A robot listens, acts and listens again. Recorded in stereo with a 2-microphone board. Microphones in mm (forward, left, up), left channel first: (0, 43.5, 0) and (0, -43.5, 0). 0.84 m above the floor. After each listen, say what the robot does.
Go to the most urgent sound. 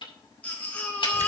Turn 15° left.
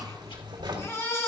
Turn 150° left.
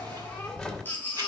Turn 20° left.
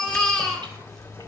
Drive 1.0 m forward.
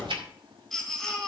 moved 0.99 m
Drive 1.0 m forward.
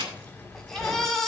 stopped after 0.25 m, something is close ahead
Something is in my way. I am facing the baby crying but have not reached it.